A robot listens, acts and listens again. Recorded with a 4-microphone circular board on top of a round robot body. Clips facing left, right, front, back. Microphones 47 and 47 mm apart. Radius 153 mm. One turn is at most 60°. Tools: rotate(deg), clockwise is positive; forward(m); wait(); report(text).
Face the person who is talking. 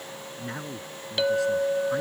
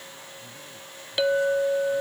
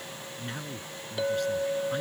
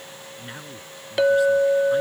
rotate(-60)
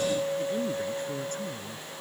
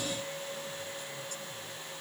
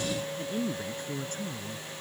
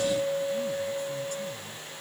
rotate(-40)
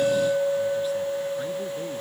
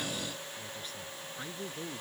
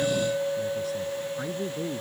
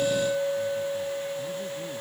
wait()
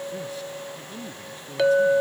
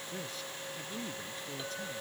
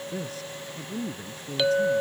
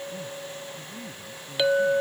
report("Facing the man speaking.")